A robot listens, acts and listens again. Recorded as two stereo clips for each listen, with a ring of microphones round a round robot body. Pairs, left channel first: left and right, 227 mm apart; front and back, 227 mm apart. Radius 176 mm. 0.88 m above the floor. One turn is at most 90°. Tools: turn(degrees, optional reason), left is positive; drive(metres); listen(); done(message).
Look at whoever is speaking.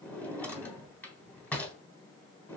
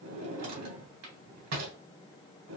listen()
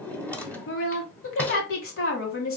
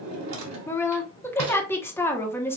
turn(degrees=80, reason="The woman speaking: 80° left.")
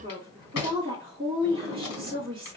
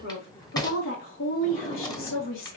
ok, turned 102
turn(degrees=-20, reason="The woman speaking is now 20° right.")
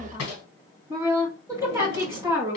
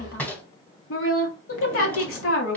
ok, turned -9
turn(degrees=-10, reason="The woman speaking is now 10° right.")
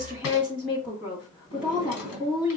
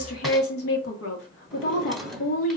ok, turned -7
done("Found it: a woman speaking, straight ahead.")